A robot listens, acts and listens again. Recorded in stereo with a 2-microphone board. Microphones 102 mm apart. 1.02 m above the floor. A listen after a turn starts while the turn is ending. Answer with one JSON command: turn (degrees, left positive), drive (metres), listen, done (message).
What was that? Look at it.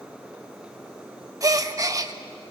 {"turn": -35}
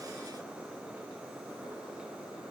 {"listen": true}
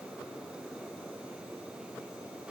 {"done": "I heard a gasp, but can't make it out now. It was about straight ahead or 110° right."}